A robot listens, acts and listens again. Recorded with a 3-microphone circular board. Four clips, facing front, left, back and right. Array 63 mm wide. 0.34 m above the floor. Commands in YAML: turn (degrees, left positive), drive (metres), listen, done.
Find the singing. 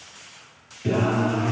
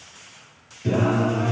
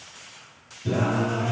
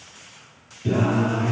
turn: 10
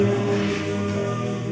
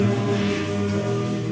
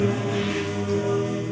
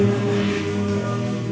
done: "Facing the singing, over 4 m away."